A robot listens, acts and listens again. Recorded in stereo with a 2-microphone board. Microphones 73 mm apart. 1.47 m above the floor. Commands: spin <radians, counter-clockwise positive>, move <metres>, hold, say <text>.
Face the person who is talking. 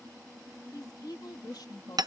spin 1.57
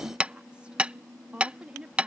spin -0.26
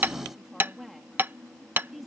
say Facing the woman speaking.